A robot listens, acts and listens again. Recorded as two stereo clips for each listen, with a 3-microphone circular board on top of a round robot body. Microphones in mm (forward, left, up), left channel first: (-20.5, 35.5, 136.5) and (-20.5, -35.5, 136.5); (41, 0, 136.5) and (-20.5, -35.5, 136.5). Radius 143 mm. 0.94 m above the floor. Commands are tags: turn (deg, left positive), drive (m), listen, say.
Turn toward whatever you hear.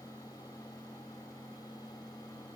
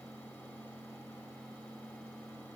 <listen/>
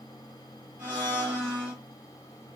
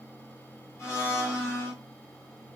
<turn deg="-30"/>
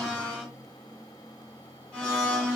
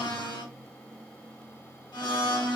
<turn deg="15"/>
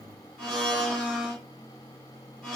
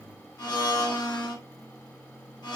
<say>Found it: a blender, straight ahead.</say>